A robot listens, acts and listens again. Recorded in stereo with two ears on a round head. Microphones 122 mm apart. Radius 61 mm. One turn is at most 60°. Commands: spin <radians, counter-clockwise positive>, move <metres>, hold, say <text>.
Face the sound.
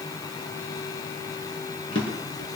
spin 0.61
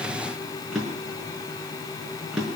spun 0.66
say Found it: a drawer, straight ahead, over 4 m away.